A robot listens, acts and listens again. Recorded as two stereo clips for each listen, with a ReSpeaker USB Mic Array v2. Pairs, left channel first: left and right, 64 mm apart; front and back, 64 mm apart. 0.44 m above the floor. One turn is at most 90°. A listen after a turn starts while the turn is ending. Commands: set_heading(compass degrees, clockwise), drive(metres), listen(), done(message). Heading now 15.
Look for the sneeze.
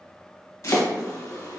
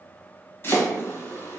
listen()
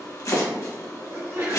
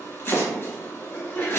set_heading(75)
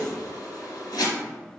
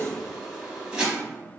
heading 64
set_heading(74)
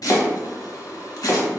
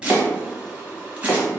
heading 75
done("Facing where the sneeze came from. I can't hear it now.")